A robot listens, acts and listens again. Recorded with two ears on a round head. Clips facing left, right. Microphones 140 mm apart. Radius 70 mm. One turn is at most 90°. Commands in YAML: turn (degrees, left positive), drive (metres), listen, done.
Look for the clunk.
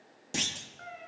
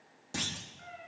turn: 25
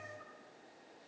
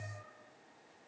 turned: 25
listen: true
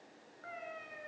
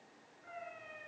done: "I heard a clunk, but can't make it out now. It was about straight ahead or 130° left."